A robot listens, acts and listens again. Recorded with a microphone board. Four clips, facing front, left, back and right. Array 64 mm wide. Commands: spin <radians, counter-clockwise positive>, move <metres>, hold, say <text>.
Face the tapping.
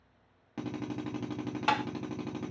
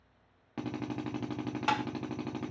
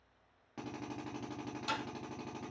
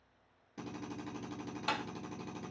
spin 0.61
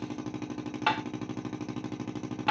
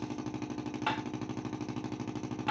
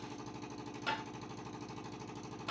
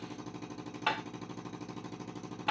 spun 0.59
say Facing the tapping, under 1 m away.